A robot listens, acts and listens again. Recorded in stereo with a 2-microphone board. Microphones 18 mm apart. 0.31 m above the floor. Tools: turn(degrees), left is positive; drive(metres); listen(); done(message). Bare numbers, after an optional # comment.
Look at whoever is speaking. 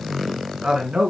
# The man speaking: about 45° right or 135° right.
turn(-45)
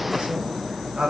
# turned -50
# So it is at 60° right.
turn(-60)
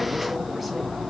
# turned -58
listen()
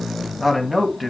done("Facing the man speaking, 2 to 4 m away.")